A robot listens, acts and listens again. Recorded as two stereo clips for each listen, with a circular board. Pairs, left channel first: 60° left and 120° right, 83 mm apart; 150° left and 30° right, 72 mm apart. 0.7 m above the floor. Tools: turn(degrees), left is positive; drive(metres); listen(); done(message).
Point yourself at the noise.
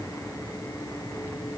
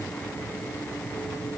listen()
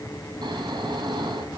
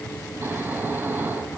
turn(degrees=-90)
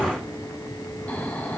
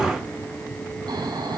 turn(degrees=-10)
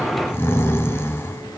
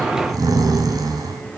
done("Found it: snoring, straight ahead, 2 to 4 m away.")